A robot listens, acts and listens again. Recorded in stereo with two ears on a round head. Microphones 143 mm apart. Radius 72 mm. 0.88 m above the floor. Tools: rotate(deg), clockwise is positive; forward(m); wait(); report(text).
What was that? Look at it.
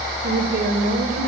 rotate(60)
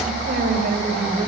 rotate(55)
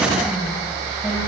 wait()
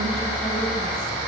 wait()
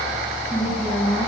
report("Facing the woman speaking, over 4 m away.")